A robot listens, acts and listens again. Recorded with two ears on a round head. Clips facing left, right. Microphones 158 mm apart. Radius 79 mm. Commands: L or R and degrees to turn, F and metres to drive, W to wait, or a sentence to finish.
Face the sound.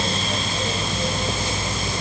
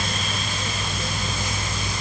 W
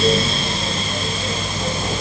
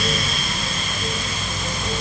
W
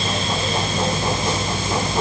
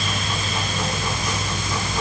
I can't make out anything to turn to.